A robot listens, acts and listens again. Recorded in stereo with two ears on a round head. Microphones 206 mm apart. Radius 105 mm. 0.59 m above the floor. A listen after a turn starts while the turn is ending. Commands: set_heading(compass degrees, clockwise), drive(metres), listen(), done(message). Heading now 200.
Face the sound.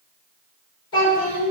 set_heading(135)
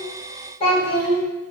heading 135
set_heading(115)
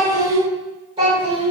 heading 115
set_heading(140)
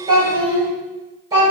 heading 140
set_heading(155)
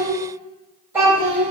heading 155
set_heading(165)
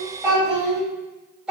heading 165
done("Facing the child speaking, 2 to 4 m away.")